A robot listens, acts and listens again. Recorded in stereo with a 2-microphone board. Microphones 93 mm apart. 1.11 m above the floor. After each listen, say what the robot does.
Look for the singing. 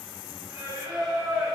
Turn 35° right.
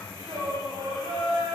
Turn 120° right.
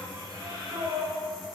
Turn 45° right.
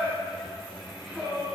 Found it: singing, straight ahead.